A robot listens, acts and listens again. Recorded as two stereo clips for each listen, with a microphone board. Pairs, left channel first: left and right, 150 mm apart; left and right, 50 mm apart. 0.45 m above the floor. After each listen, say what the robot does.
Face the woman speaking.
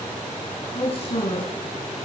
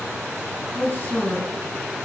Turn 40° left.
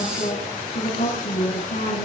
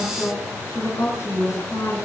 Turn 110° left.
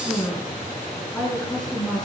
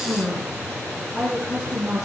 Facing the woman speaking.